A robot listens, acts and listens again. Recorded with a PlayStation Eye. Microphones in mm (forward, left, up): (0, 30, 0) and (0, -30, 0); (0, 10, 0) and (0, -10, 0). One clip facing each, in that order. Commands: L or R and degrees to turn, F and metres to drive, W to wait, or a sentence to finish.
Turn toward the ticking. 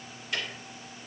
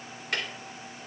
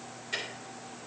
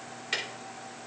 R60
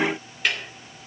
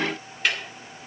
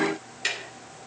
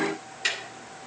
Found it: ticking, straight ahead.